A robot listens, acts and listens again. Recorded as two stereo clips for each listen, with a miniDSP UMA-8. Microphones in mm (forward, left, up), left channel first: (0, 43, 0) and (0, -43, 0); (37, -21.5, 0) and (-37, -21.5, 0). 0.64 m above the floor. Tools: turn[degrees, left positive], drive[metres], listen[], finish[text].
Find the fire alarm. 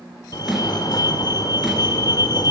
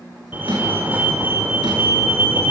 Thought: The fire alarm: 120° left.
Action: turn[120]
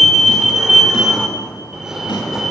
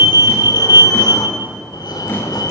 Action: finish[Found it: a fire alarm, straight ahead, 2 to 4 m away.]